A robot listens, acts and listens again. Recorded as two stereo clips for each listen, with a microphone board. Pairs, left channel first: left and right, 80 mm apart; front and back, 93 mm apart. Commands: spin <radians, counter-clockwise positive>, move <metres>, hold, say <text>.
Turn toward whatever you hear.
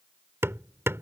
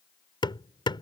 spin -0.52
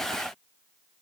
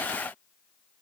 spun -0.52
hold
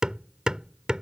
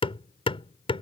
spin -0.17
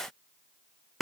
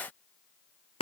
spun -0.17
say Facing the hammering.